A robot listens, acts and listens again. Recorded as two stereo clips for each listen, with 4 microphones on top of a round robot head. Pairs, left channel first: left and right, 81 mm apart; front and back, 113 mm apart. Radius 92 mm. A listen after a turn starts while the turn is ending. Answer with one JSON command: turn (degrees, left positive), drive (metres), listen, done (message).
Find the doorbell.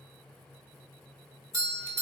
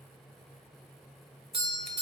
{"turn": -135}
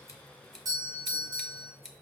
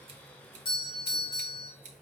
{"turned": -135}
{"turn": -45}
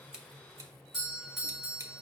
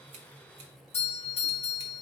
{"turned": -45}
{"done": "Facing the doorbell, 2 to 4 m away."}